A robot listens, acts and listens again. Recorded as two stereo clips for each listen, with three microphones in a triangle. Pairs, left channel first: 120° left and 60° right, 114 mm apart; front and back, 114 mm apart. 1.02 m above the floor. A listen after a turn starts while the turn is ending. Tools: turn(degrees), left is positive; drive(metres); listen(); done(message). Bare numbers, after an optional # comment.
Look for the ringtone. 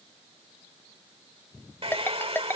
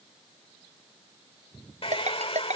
# The ringtone: 170° right.
turn(-170)
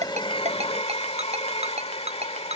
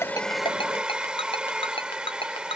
# The ringtone is now 40° right.
turn(-40)
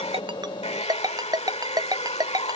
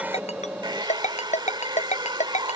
done("Found it: a ringtone, straight ahead.")